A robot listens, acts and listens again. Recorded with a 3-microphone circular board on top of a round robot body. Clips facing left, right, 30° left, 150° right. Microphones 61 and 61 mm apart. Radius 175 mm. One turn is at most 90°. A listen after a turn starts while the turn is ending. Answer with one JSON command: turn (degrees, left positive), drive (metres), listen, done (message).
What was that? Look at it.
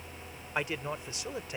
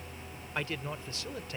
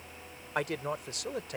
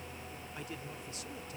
{"turn": 20}
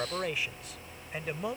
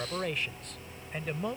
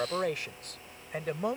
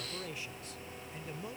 {"done": "Facing the man speaking."}